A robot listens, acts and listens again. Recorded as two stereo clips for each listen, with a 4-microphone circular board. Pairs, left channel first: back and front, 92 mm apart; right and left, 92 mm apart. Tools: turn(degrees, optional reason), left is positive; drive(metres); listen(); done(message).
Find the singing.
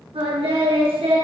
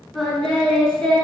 turn(degrees=-10, reason="The singing: 10° right.")
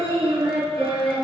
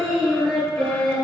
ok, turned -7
turn(degrees=-15, reason="The singing is now 15° right.")
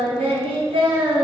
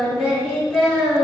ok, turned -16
done("Facing the singing, over 4 m away.")